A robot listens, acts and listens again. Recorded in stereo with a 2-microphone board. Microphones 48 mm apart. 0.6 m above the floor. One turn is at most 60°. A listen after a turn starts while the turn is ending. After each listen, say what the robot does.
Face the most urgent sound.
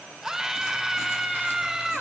Turn 30° right.
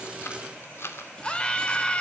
Turn 25° left.
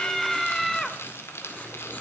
Turn 10° left.
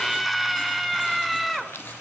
Found it: a scream, straight ahead.